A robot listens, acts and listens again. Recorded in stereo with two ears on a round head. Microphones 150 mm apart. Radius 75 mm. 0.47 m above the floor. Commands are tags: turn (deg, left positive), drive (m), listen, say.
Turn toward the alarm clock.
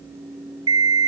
<turn deg="-25"/>
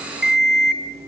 <say>Found it: an alarm clock, straight ahead, 1 to 2 m away.</say>